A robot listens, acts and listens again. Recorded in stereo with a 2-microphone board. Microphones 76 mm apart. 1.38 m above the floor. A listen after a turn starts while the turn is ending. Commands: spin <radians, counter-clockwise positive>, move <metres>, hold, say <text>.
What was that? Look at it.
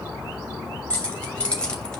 spin 0.52
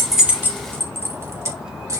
spin -0.70
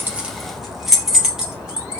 spin -0.17
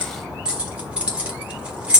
spin -0.26
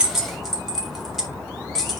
say Facing the keys jangling.